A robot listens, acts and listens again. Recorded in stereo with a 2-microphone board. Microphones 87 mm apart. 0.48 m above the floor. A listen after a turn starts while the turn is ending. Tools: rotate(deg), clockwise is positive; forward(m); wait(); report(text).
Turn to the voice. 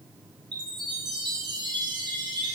wait()
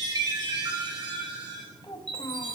rotate(-65)
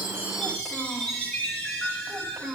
rotate(10)
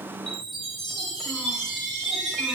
wait()
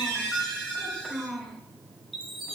report("Found it: a child speaking, straight ahead, 1 to 2 m away.")